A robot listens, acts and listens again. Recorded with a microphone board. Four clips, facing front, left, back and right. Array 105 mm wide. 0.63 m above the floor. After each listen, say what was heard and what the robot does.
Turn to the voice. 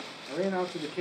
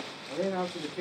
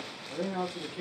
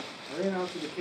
The man speaking: 15° right. Turn 15° right.
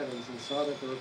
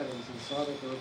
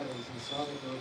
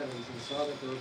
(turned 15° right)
Found it: a man speaking, straight ahead, 1 to 2 m away.